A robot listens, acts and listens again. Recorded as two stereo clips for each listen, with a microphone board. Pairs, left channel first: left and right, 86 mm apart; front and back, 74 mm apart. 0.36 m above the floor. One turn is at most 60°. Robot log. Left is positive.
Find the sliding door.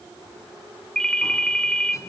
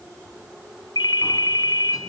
cmd idle
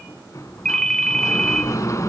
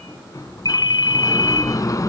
note: The sliding door: 40° left.
cmd yaw +40
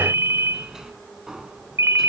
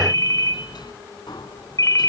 end: Facing the sliding door, 1 to 2 m away.